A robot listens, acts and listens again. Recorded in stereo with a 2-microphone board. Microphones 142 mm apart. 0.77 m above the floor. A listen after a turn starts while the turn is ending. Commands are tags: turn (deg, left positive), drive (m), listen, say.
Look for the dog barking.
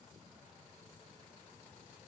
<listen/>
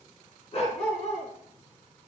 <turn deg="50"/>
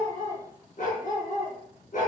<turn deg="70"/>
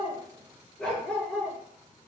<say>Found it: a dog barking, straight ahead.</say>